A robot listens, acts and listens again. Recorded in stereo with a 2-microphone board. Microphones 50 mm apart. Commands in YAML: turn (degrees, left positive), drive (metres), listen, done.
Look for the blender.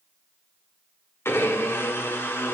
turn: 60
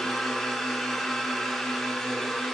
done: "Found it: a blender, straight ahead, 1 to 2 m away."